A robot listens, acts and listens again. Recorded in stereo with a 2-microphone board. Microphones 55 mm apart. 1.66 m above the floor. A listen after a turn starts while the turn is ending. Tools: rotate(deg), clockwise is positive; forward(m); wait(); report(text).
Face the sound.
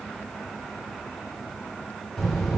rotate(-30)
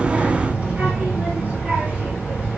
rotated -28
rotate(30)
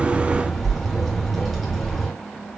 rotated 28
report("Facing the child speaking, 2 to 4 m away.")